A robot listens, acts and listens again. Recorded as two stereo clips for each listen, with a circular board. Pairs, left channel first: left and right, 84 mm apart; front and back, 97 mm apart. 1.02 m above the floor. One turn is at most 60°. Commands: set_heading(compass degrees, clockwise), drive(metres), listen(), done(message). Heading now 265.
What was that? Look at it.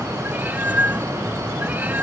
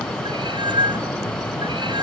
set_heading(325)
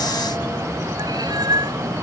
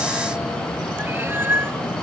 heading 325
set_heading(25)
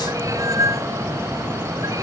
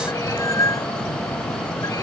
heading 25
set_heading(75)
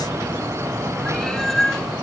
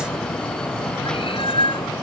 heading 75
done("Facing the cat meowing.")